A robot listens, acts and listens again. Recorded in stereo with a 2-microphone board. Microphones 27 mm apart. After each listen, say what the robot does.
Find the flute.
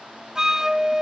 Turn 25° right.
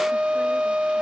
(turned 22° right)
Turn 135° right.
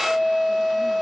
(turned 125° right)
Found it: a flute, straight ahead.